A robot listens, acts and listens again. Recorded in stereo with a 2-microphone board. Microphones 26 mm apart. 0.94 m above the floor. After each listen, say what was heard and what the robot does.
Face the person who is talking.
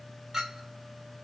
Keep listening.
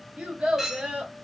The child speaking: about 65° right or 115° right. Turn 65° right.
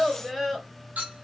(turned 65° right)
Facing the child speaking.